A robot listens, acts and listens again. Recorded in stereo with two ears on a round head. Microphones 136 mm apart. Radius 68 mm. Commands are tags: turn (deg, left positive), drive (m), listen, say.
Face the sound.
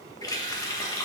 <turn deg="25"/>
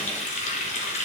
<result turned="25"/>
<turn deg="125"/>
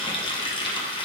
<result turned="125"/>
<turn deg="35"/>
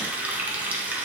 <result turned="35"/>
<turn deg="-10"/>
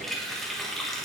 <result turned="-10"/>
<say>Found it: a running tap, straight ahead, 1 to 2 m away.</say>